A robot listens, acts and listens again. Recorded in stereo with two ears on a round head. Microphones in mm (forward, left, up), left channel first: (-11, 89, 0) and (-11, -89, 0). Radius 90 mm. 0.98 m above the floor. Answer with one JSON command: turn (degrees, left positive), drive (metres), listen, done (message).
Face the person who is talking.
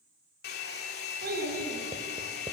{"turn": -50}
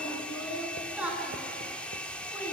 {"done": "Found it: a child speaking, straight ahead."}